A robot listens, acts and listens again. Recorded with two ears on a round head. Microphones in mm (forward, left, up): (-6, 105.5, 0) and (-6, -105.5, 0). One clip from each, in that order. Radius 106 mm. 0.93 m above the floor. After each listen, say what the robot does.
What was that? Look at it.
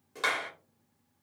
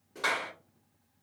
Turn 40° left.
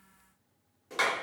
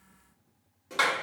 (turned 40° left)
Facing the clap, 1 to 2 m away.